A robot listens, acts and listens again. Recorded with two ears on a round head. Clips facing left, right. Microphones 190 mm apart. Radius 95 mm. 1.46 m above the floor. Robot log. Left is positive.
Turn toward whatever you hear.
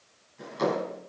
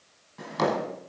cmd yaw -90
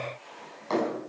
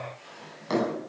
note: So it is at 15° right.
cmd yaw -15
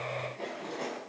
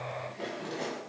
end: Found it: a drawer, straight ahead.